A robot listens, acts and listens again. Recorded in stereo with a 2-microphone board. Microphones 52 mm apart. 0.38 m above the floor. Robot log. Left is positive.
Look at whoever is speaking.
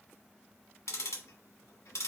cmd idle
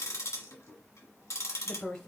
note: The woman speaking: about 20° left or 160° left.
cmd yaw +20
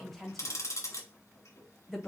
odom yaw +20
end: Found it: a woman speaking, straight ahead, 1 to 2 m away.